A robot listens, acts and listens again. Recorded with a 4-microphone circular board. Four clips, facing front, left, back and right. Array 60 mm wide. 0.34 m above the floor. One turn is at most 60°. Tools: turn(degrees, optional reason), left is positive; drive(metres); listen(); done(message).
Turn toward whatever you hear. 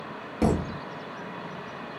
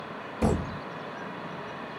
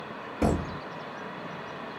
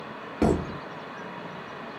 turn(degrees=-60, reason="The thud: 75° right.")
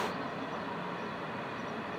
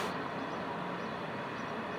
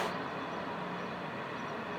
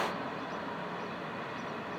turn(degrees=-15, reason="Nothing new. It was at 15° right.")
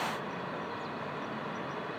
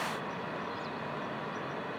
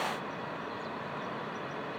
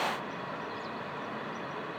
done("Facing where the thud came from. I can't hear it now.")